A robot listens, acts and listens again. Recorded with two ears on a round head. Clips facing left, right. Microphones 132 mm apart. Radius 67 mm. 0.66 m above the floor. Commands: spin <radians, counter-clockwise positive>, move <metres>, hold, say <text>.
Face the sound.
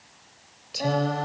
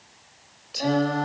spin 0.52
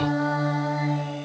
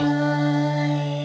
spin -0.52
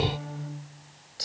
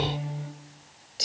spin -0.44
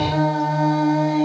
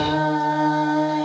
spin 0.17
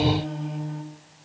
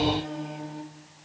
say Found it: singing, straight ahead.